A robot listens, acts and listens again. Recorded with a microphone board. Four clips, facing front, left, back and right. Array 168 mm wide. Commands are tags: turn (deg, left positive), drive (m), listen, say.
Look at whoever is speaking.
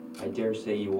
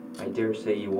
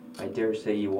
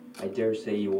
<turn deg="145"/>
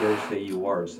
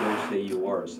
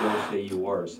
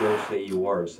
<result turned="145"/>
<turn deg="-20"/>
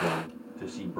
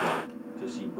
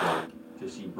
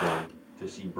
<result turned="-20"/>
<say>Facing the man speaking.</say>